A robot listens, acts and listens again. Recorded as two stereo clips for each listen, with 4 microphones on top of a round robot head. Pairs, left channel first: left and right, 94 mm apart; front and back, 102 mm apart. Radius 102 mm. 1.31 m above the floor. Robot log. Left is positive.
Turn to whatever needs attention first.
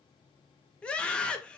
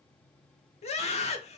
note: The scream: 10° left.
cmd yaw +10
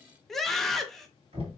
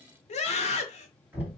end: Found it: a scream, straight ahead, 1 to 2 m away.